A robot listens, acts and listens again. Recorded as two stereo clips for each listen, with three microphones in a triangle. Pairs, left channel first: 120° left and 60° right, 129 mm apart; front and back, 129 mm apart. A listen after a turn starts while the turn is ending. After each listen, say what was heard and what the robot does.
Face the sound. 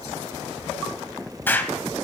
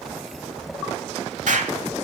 The explosion: 165° right. Turn 165° right.
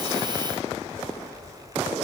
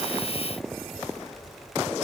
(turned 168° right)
I heard an explosion from this way, but can't make it out now.